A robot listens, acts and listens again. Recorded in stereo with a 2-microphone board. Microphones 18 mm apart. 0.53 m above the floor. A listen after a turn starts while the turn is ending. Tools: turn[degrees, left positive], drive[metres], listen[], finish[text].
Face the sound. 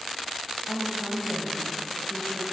Thought: The woman speaking: about 55° left or 125° left.
Action: turn[55]
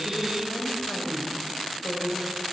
Thought: So it is at 35° left.
Action: turn[35]
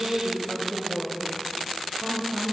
Thought: The woman speaking is now 15° right.
Action: turn[-15]
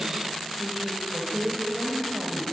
Action: finish[Found it: a woman speaking, straight ahead.]